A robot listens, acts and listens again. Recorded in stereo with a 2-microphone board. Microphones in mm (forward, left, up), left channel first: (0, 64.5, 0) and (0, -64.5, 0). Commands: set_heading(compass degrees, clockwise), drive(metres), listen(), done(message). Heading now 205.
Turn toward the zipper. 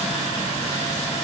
listen()
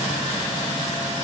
listen()
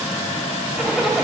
set_heading(235)
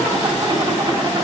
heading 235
set_heading(15)
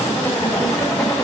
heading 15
set_heading(0)
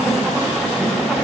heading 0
done("Facing the zipper.")